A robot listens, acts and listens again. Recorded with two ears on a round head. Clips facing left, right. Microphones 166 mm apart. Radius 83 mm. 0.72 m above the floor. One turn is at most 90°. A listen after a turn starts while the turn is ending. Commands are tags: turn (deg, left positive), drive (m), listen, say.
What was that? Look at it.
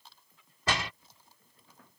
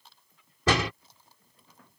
<turn deg="-60"/>
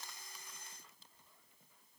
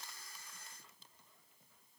<listen/>
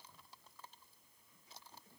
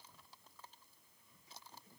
<say>I heard a door slam, but can't make it out now. It was about straight ahead or 60° right.</say>